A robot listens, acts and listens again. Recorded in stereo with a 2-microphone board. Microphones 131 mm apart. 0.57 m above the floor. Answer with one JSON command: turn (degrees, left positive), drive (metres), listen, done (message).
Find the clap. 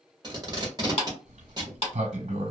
{"turn": 50}
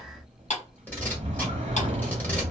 {"listen": true}
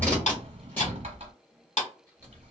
{"turn": 75}
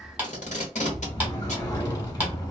{"listen": true}
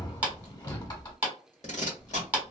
{"turn": -15}
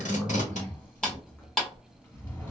{"done": "Facing the clap, 1 to 2 m away."}